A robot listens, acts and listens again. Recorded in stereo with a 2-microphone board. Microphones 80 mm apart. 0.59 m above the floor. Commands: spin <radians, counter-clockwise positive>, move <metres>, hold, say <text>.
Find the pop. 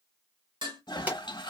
spin -0.44
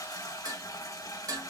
hold
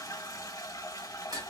say I heard a pop, but can't make it out now. It was about straight ahead or 130° right.